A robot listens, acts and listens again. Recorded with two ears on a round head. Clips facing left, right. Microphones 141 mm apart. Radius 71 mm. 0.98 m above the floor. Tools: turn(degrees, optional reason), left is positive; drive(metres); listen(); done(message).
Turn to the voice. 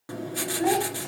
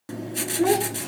turn(degrees=-90)
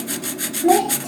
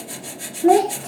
done("Found it: a child speaking, straight ahead.")